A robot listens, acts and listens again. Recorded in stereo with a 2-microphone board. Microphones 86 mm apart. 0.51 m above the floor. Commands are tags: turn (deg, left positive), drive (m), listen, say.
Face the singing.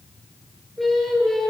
<turn deg="30"/>
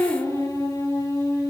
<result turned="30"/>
<turn deg="140"/>
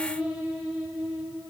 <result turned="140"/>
<turn deg="-15"/>
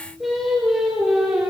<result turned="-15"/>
<say>Found it: singing, straight ahead.</say>